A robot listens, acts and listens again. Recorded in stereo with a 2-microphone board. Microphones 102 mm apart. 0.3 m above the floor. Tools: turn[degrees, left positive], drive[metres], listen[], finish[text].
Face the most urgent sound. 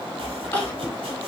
Thought: The crying: about 20° left or 160° left.
Action: turn[20]
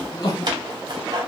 Thought: So it is at 140° left.
Action: turn[140]
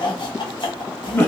Thought: The crying is now 25° left.
Action: turn[25]
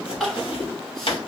Action: finish[Found it: crying, straight ahead, 1 to 2 m away.]